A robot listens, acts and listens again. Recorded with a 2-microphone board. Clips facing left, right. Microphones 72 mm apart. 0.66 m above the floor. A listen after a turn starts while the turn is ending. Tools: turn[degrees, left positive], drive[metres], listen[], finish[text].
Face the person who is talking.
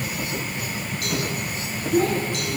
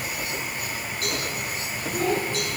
Thought: The child speaking: about 55° left or 125° left.
Action: turn[55]
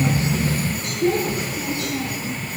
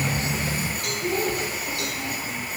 Thought: So it is at 70° left.
Action: turn[70]
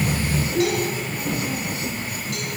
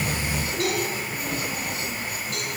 Thought: The child speaking is now 25° left.
Action: turn[25]
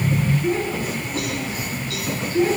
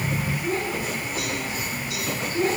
Action: finish[Found it: a child speaking, straight ahead, over 4 m away.]